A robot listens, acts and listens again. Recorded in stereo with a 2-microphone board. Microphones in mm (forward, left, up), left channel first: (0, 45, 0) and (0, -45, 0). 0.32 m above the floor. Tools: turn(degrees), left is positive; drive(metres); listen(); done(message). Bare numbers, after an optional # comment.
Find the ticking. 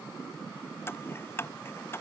# The ticking: about 25° left or 155° left.
turn(25)
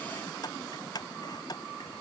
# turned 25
# So it is at 130° left.
turn(130)
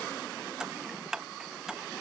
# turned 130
done("Found it: ticking, straight ahead.")